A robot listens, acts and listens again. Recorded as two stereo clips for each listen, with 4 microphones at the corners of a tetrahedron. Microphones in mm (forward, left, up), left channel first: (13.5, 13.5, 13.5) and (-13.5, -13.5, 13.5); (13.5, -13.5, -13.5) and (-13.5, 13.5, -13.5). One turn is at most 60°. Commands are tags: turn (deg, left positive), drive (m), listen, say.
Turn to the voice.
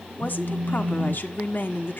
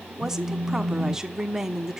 <turn deg="60"/>
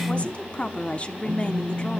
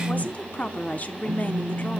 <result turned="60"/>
<say>Facing the woman speaking, 1 to 2 m away.</say>